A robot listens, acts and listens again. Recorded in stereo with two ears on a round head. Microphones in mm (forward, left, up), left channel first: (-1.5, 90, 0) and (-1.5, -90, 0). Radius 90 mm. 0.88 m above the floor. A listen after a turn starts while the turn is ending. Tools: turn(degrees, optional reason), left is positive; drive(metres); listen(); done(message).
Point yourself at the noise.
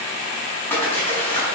turn(degrees=30)
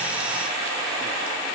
listen()
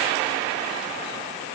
done("I heard a splash, but can't make it out now. It was about 20° right or 140° left.")